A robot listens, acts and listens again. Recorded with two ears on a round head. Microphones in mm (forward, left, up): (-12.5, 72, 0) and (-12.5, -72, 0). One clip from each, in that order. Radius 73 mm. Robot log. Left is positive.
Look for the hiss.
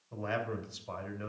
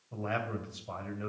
cmd idle
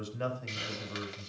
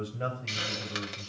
note: The hiss: about 15° right or 165° right.
cmd yaw -15
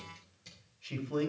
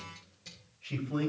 end: Facing the hiss.